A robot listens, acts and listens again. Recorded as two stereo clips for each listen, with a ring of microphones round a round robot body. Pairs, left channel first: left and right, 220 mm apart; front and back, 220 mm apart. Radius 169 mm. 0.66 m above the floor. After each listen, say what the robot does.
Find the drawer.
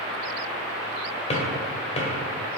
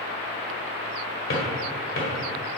Turn 30° left.
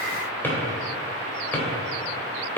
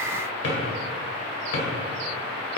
Turn 10° left.
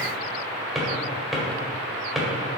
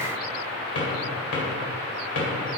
Facing the drawer.